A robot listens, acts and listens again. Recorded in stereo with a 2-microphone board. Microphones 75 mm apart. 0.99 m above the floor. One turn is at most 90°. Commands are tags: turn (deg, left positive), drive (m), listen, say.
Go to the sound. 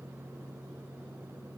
<listen/>
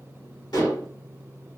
<turn deg="90"/>
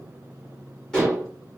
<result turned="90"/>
<drive m="1.0"/>
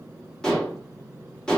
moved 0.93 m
<turn deg="10"/>
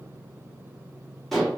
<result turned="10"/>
<drive m="1.0"/>
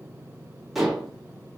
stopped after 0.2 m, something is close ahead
<say>Arrived at the dishes clattering, straight ahead.</say>